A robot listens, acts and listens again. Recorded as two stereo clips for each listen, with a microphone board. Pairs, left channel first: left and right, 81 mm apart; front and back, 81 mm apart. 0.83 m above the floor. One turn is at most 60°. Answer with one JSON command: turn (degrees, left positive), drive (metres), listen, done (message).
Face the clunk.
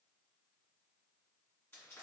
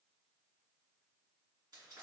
{"listen": true}
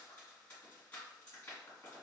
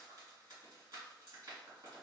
{"listen": true}
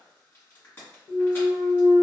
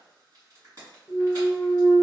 {"turn": 60}
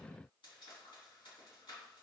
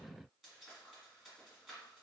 {"turn": 30}
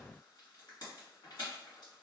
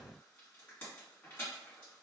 {"done": "I heard a clunk from this way, but can't make it out now."}